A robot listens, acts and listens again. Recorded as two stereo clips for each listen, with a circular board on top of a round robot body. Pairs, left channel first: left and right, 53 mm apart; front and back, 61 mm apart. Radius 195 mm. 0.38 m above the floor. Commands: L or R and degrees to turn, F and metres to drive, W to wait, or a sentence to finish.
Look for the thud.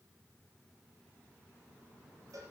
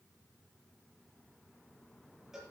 W
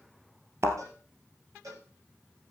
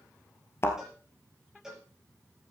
R50
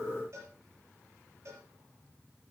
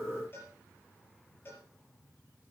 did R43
R10
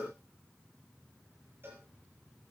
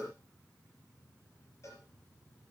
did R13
Facing where the thud came from. I can't hear it now.